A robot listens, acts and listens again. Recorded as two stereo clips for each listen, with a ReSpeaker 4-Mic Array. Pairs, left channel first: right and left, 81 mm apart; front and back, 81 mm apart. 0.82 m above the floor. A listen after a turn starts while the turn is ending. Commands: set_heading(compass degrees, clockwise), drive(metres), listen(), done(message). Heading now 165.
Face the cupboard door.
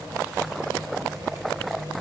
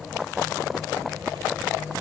listen()
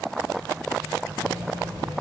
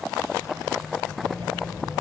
listen()
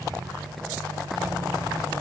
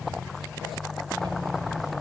done("I can't make out a cupboard door to turn to.")